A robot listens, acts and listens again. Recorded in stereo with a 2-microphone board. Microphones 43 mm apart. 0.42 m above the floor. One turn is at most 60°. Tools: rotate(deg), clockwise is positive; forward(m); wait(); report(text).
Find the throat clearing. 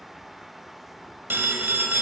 wait()
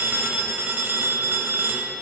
wait()
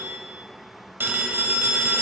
report("I can't make out throat clearing to turn to.")